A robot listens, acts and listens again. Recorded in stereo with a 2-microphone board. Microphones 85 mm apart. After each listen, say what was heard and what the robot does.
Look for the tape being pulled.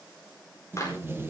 The tape being pulled: about 30° right or 150° right. Turn 30° right.
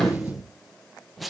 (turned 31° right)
Facing the tape being pulled, under 1 m away.